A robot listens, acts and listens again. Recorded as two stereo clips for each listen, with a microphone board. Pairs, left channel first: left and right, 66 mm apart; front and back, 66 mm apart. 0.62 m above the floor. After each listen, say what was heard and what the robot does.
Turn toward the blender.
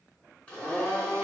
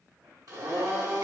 The blender: 160° left. Turn 160° left.
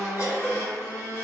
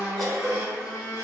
The blender is now 25° left. Turn 25° left.
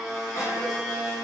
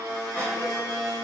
Found it: a blender, straight ahead, 1 to 2 m away.